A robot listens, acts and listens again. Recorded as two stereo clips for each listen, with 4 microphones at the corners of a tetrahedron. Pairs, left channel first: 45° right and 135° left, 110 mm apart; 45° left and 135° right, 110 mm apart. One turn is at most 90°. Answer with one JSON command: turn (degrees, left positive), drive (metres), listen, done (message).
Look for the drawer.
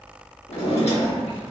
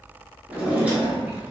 {"turn": -60}
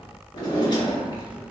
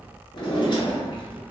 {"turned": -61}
{"done": "Facing the drawer, 1 to 2 m away."}